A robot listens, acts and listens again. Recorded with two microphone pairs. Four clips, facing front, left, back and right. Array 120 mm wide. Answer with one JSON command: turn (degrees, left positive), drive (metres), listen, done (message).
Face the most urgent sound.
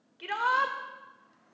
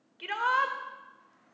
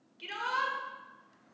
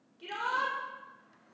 {"turn": 45}
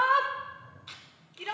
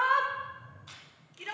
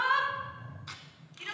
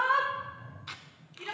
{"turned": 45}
{"done": "Found it: a shout, straight ahead, 1 to 2 m away."}